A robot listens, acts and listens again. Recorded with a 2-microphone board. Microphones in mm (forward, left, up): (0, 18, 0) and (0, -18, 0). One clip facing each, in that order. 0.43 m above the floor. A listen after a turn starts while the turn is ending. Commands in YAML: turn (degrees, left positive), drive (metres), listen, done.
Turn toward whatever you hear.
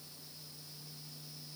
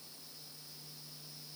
listen: true
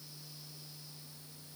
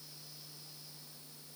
listen: true
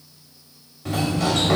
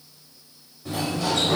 turn: 70
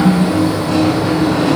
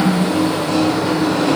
turn: 10
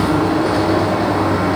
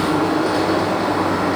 done: "Facing the sliding door."